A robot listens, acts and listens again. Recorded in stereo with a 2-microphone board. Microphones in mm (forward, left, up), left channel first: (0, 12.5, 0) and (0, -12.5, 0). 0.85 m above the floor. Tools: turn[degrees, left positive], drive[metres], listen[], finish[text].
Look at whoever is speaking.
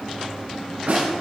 Action: listen[]
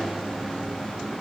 Action: listen[]
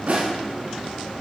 Action: finish[I can't make out anyone speaking, only a snare drum.]